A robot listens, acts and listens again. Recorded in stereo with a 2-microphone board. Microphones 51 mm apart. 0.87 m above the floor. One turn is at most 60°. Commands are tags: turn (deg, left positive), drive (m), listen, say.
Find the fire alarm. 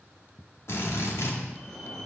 <turn deg="30"/>
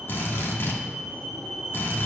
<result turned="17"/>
<say>Found it: a fire alarm, straight ahead, 2 to 4 m away.</say>